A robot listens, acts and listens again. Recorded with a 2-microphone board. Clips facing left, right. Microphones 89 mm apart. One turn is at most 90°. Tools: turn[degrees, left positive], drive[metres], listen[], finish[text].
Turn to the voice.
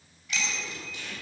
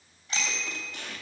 Action: listen[]
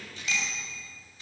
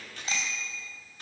Action: listen[]
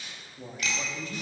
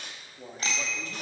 Action: turn[-30]
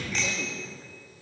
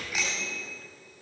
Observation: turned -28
Action: listen[]
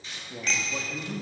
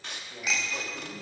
Thought: So it is at 20° left.
Action: turn[20]
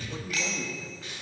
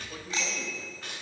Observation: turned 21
Action: finish[Facing the man speaking, 2 to 4 m away.]